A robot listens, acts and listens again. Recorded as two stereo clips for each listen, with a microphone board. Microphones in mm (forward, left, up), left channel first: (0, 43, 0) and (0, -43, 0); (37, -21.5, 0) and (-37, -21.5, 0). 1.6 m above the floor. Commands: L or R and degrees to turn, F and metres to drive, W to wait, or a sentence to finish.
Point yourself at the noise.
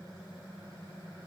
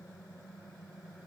W
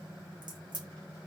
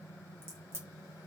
R125
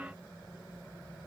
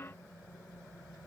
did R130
Facing where the crack came from. I can't hear it now.